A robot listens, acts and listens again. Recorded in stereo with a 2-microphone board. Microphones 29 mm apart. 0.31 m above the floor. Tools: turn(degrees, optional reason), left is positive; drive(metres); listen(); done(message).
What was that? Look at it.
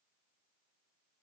listen()
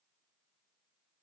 listen()
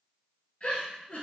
turn(degrees=50, reason="The giggle: about 50° left or 130° left.")
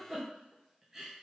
done("Facing the giggle.")